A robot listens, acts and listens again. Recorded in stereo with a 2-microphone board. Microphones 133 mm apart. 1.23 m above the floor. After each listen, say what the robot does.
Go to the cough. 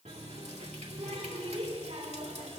Keep listening.
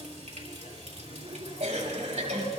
Turn 55° right.
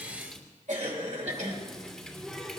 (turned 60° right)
Turn 65° right.
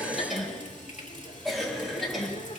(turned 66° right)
Drive 1.0 m forward.
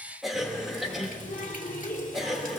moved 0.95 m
Drive 1.0 m forward.
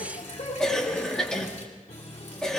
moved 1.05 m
Drive 1.0 m forward.
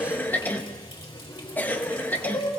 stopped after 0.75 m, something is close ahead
Turn 15° left.
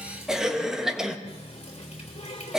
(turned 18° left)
Arrived at the cough, straight ahead.